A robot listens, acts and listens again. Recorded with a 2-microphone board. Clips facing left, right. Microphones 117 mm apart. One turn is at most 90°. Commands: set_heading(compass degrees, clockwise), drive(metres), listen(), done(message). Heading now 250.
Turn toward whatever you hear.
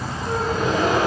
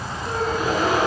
set_heading(280)
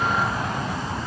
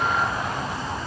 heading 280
listen()
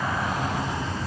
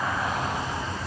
done("I heard a gasp, but can't make it out now. It was about 25° left or 145° right.")